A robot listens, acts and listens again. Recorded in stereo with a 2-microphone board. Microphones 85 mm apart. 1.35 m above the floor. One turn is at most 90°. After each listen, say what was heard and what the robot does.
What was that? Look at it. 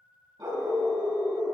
The dog barking: about 45° right or 135° right. Turn 45° right.
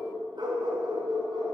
So it is at 115° right. Turn 90° right.
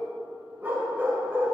The dog barking is now 25° right. Turn 25° right.
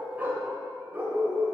The dog barking is now 30° right. Turn 30° right.
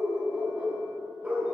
The dog barking is now 15° right. Turn 15° right.
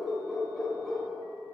Facing the dog barking.